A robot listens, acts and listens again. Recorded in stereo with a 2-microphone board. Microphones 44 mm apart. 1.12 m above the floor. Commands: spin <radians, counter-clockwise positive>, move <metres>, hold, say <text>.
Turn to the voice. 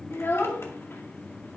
spin 1.13
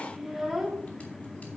say Facing the child speaking, 1 to 2 m away.